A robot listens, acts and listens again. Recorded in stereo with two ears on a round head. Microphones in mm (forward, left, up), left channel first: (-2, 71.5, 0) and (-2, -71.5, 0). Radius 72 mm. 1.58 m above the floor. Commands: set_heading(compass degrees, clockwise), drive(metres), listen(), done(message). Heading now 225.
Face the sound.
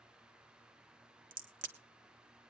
set_heading(280)
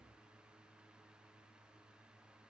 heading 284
listen()
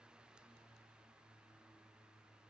done("I heard a crack, but can't make it out now. It was about 5° left or 70° right.")